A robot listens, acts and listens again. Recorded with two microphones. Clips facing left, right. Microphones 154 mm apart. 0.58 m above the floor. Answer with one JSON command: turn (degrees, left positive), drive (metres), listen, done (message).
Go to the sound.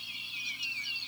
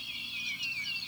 {"listen": true}
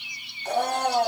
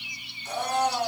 {"turn": 60}
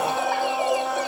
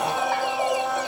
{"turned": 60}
{"drive": 1.0}
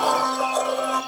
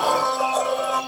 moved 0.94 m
{"drive": 1.0}
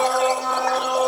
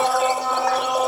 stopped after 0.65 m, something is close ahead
{"done": "Arrived at the blender, straight ahead."}